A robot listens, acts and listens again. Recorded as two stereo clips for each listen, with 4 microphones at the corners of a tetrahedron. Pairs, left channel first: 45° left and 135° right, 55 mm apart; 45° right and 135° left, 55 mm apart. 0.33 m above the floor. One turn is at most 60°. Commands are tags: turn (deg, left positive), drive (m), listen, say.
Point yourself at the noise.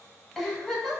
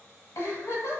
<turn deg="-50"/>
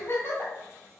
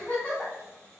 <say>Facing the giggle, 1 to 2 m away.</say>